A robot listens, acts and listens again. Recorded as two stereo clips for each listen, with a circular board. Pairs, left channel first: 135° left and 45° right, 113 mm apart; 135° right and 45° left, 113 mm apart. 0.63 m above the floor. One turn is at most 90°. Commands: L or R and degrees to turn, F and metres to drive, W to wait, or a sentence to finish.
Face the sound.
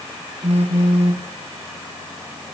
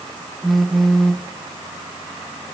R45
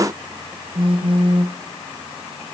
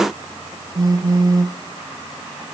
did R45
R10
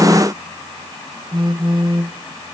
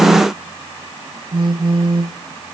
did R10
Facing the phone buzzing.